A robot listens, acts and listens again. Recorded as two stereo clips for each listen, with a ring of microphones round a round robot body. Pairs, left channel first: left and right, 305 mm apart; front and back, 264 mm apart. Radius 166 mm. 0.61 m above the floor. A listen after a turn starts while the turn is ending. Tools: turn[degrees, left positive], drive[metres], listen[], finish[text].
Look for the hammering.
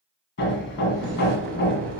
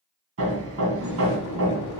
Thought: The hammering: 145° left.
Action: turn[145]
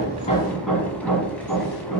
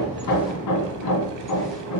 Action: finish[Found it: hammering, straight ahead.]